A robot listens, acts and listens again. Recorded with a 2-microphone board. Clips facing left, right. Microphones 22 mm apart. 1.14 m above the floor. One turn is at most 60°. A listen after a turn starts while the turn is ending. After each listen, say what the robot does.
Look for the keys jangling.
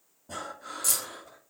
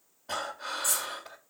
Turn 60° left.
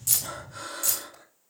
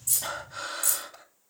Turn 40° left.
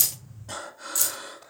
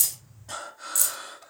Turn 30° left.
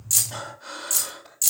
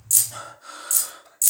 Turn 25° left.
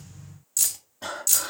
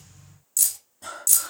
Turn 20° left.
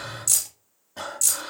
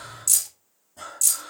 Found it: keys jangling, straight ahead.